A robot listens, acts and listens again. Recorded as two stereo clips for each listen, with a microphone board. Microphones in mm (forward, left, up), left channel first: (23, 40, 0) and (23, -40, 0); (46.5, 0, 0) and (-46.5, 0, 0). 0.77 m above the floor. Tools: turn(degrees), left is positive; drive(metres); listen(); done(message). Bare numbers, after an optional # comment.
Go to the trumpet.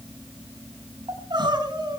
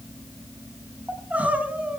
listen()
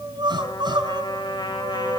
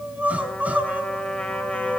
# The trumpet: 80° left.
turn(80)
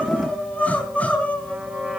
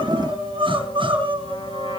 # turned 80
# The trumpet is now 15° right.
turn(-15)
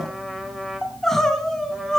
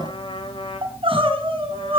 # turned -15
drive(1.0)
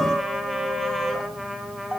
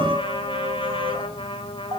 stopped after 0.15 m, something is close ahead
done("Something is in my way. I am facing the trumpet but have not reached it.")